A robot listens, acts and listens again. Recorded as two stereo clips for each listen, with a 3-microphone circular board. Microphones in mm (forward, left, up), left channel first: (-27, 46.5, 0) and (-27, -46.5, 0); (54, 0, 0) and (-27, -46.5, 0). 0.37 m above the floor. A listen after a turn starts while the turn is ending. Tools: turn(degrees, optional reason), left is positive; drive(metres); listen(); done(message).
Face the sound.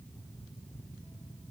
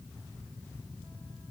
listen()
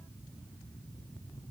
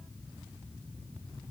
listen()
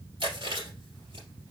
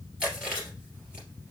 turn(degrees=-70, reason="The chewing: 70° right.")
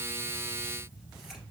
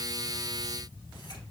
listen()
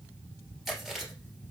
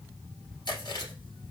done("Found it: chewing, straight ahead.")